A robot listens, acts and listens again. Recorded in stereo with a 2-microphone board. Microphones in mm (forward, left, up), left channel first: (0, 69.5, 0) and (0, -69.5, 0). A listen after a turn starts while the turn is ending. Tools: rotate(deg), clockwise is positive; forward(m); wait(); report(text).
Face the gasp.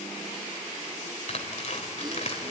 wait()
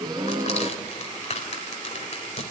rotate(30)
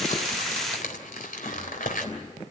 wait()
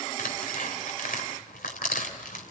report("I heard a gasp, but can't make it out now. It was about straight ahead or 120° right.")